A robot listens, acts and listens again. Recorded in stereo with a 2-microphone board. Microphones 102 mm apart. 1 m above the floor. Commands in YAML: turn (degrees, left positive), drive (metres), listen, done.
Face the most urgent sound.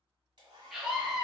turn: -30
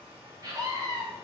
turn: -140
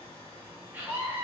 turn: -20
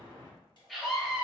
done: "Found it: a scream, straight ahead."